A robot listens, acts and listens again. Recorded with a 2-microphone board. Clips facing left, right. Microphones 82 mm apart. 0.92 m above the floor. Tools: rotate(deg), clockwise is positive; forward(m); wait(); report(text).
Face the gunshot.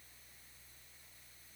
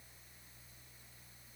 wait()
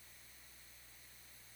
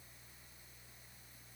wait()
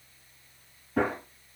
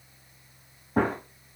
rotate(45)
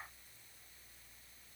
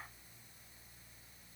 wait()
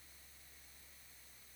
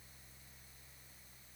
report("I heard a gunshot, but can't make it out now. It was about straight ahead or 90° right.")